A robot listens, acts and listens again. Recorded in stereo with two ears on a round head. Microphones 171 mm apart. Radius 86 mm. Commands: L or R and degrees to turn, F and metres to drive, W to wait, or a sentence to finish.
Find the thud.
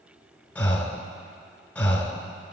W
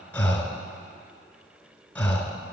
W
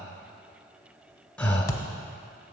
L20
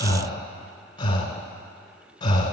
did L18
W
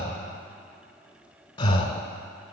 I heard a thud, but can't make it out now. It was about straight ahead or 145° left.